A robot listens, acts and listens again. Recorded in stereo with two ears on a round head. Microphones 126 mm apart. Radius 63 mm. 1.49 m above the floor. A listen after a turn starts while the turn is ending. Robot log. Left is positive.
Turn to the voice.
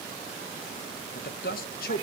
note: The man speaking: about 75° left or 105° left.
cmd yaw +75
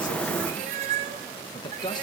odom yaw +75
note: So it is at 30° left.
cmd yaw +30
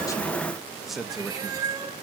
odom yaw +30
end: Facing the man speaking.